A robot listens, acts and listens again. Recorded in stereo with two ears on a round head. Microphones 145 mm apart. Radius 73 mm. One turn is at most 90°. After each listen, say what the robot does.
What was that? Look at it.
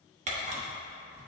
Turn 45° right.
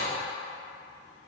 Keep listening.
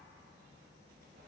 Keep listening.
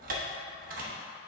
Turn 80° right.
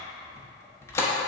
Turn 20° left.
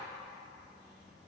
Keep listening.
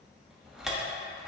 Facing the camera shutter.